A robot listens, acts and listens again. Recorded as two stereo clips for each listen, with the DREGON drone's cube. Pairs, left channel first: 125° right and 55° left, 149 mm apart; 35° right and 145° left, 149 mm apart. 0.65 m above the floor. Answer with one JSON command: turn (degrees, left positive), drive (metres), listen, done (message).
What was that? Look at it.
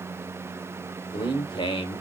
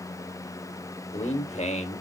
{"turn": -70}
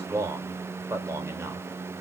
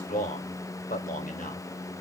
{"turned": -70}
{"turn": -15}
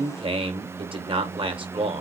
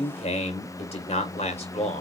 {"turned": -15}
{"done": "Found it: a man speaking, straight ahead, 2 to 4 m away."}